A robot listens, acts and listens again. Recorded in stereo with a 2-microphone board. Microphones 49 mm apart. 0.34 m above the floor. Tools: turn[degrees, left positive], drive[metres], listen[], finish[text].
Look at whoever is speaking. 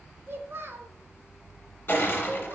Thought: The child speaking: about 55° right or 125° right.
Action: turn[-55]
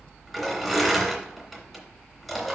Action: listen[]
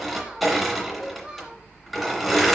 Thought: So it is at 25° right.
Action: turn[-25]
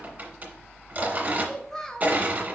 Thought: The child speaking is now 15° left.
Action: turn[15]
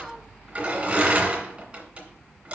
Action: finish[Facing the child speaking.]